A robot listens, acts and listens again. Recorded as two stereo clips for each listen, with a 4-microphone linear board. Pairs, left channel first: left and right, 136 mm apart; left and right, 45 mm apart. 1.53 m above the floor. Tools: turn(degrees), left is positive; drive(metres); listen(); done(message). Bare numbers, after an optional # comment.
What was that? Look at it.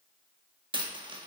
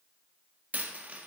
# The dropped coin: about 35° right or 145° right.
turn(-35)
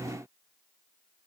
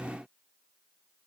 listen()
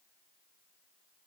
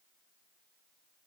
done("I heard a dropped coin, but can't make it out now. It was about straight ahead or 110° right.")